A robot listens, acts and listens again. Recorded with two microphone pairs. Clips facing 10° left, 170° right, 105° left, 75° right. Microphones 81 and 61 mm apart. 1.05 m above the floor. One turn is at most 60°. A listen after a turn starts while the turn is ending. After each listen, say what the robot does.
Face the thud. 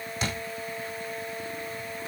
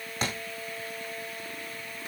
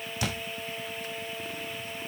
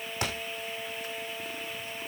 Turn 60° right.
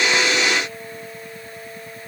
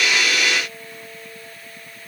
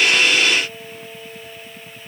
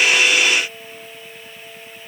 Turn 60° right.
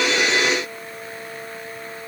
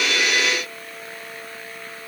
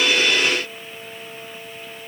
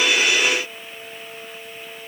I heard a thud from this way, but can't make it out now.